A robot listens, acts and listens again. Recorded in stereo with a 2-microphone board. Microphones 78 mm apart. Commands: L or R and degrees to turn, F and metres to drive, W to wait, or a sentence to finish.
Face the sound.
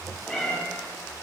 L30
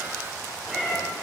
L30
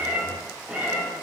R15
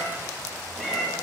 Found it: a cat meowing, straight ahead, over 4 m away.